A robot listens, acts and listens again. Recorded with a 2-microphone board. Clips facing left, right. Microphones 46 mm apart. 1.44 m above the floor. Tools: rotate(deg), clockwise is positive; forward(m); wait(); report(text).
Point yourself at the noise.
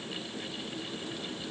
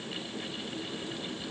wait()
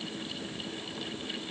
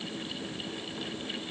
wait()
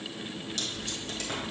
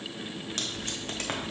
rotate(50)
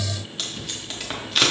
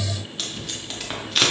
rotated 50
report("Found it: tape being pulled, straight ahead, under 1 m away.")